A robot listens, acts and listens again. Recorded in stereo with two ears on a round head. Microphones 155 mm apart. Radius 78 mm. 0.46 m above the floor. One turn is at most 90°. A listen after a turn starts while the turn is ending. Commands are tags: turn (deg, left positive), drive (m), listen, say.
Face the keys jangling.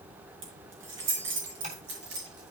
<turn deg="-90"/>
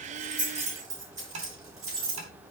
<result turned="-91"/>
<turn deg="-20"/>
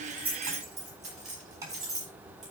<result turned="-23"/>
<say>Facing the keys jangling.</say>